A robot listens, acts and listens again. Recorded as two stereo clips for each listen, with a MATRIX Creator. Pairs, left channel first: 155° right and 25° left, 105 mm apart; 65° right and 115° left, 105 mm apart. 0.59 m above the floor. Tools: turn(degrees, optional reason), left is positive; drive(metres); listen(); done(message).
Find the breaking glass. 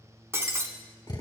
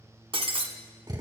turn(degrees=85, reason="The breaking glass: 85° left.")
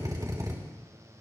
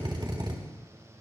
done("Facing where the breaking glass came from. I can't hear it now.")